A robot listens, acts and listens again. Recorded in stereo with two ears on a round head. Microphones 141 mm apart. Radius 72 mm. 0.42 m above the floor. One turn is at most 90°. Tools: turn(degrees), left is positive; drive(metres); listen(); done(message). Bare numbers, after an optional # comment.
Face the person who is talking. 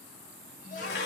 # The child speaking: about 50° left or 130° left.
turn(50)
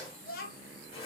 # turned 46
# So it is at 60° left.
turn(60)
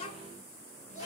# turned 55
# The child speaking is now 45° left.
turn(45)
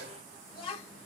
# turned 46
# The child speaking is now 35° left.
turn(35)
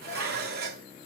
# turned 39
listen()
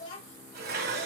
# The child speaking is now 30° left.
turn(30)
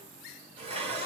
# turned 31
listen()
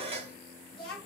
done("Facing the child speaking, 1 to 2 m away.")